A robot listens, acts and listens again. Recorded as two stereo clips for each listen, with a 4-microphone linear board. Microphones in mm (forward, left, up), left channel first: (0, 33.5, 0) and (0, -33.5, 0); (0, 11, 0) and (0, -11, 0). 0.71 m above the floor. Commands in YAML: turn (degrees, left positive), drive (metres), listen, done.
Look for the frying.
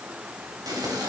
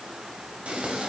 turn: -75
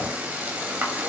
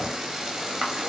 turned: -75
turn: -25
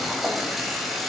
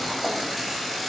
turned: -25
done: "Found it: frying, straight ahead."